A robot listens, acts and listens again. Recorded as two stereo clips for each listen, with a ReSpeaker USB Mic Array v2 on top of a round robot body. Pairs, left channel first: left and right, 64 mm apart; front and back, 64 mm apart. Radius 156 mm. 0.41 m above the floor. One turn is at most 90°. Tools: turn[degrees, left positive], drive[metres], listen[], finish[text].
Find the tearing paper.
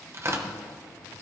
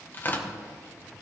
Thought: The tearing paper: 55° right.
Action: turn[-55]
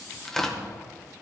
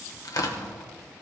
Action: finish[Found it: tearing paper, straight ahead, 1 to 2 m away.]